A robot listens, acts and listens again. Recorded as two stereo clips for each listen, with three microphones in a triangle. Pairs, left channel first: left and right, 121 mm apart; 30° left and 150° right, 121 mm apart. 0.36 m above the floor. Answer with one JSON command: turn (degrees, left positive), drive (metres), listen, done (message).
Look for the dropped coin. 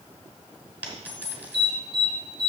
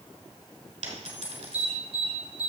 {"turn": -165}
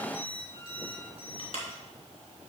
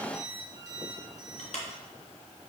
{"done": "Facing where the dropped coin came from. I can't hear it now."}